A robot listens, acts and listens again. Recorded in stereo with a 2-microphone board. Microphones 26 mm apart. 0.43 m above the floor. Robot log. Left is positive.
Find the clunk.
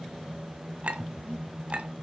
cmd idle
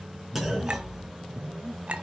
cmd yaw -30
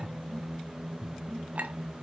cmd idle
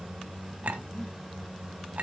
end: I heard a clunk, but can't make it out now. It was about 15° left or 135° right.